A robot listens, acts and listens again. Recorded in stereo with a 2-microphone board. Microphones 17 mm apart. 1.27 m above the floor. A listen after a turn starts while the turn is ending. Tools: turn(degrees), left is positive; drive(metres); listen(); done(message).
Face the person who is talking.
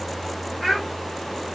turn(degrees=30)
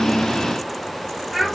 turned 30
turn(degrees=-20)
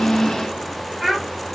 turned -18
done("Found it: a child speaking, straight ahead, 1 to 2 m away.")